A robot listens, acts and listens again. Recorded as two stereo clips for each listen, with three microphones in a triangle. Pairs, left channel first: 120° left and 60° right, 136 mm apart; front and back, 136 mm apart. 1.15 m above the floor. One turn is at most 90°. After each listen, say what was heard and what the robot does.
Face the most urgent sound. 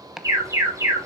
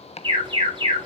The alarm: 130° right. Turn 90° right.
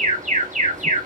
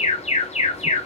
The alarm is now 35° right. Turn 35° right.
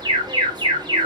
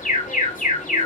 Facing the alarm, 2 to 4 m away.